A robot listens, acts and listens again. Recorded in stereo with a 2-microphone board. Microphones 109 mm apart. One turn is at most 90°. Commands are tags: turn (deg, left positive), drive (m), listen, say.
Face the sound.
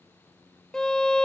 <turn deg="30"/>
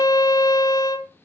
<turn deg="90"/>
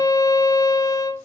<turn deg="40"/>
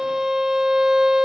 <say>Found it: a violin, straight ahead.</say>